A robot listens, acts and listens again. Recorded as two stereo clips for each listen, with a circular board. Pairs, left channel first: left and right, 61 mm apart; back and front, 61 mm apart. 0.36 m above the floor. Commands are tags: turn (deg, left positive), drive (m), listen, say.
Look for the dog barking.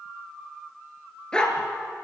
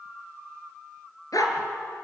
<turn deg="170"/>
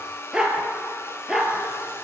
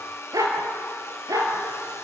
<say>Found it: a dog barking, straight ahead.</say>